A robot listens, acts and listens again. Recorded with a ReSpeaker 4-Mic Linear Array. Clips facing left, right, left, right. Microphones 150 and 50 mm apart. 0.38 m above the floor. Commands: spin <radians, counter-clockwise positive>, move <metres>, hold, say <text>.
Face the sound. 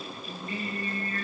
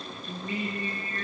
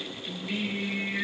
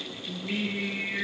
spin -0.35
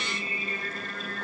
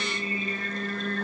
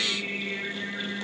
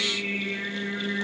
spin -2.44
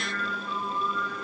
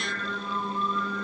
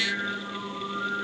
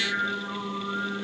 spin -0.70
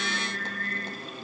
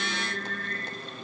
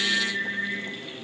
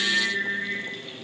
spin -0.26
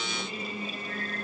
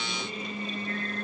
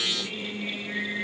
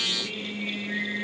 say Facing the singing.